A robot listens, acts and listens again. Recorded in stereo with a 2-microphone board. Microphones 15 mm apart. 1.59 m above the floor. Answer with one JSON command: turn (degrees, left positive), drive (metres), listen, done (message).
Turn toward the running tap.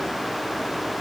{"listen": true}
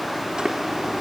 {"turn": -70}
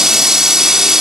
{"turn": -35}
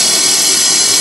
{"turn": -15}
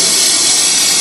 {"done": "Found it: a running tap, straight ahead."}